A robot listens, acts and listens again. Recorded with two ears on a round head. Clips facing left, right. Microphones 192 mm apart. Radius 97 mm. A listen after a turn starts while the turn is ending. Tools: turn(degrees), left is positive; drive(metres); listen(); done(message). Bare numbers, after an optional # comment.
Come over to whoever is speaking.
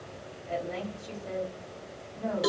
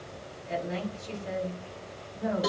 # The woman speaking: about 20° right or 160° right.
turn(-20)
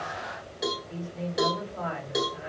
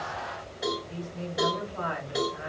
drive(1.0)
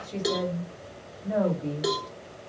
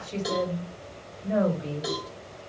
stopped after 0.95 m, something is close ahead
# The woman speaking is now 10° right.
turn(-10)
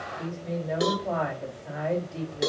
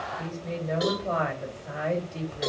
done("Arrived at the woman speaking, straight ahead.")